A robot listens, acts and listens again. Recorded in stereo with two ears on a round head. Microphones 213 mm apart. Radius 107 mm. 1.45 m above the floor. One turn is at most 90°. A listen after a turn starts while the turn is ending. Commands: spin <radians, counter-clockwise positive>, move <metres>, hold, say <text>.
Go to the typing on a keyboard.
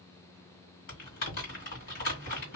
spin 0.70
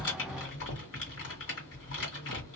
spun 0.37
spin 1.57
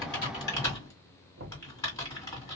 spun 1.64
spin 0.26
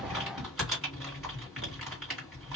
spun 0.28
move 1.0
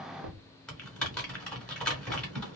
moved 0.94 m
move 1.0
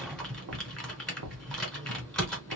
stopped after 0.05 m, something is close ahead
say Arrived at the typing on a keyboard, straight ahead.